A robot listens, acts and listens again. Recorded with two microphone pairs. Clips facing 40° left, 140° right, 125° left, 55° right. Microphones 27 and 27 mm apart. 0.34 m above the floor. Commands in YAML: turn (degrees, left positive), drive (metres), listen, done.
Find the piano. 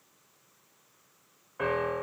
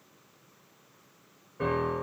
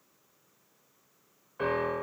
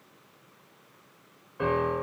turn: 55
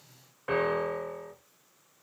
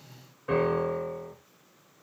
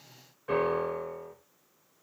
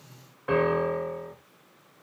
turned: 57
done: "Found it: a piano, straight ahead."